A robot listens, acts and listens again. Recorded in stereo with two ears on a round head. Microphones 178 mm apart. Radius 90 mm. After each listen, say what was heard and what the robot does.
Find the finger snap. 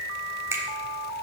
Turn 30° right.
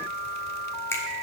So it is at 15° left. Turn 15° left.
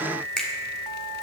Found it: a finger snap, straight ahead, 1 to 2 m away.